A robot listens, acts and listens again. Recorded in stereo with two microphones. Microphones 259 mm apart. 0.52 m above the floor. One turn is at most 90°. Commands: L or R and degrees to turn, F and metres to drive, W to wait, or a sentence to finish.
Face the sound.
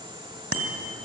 R60
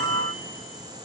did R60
W
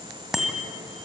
Found it: a bicycle bell, straight ahead.